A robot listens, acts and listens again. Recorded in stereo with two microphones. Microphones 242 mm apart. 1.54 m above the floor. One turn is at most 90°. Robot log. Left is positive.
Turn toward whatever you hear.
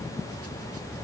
cmd idle
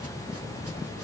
cmd idle
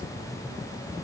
end: I can't make out anything to turn to.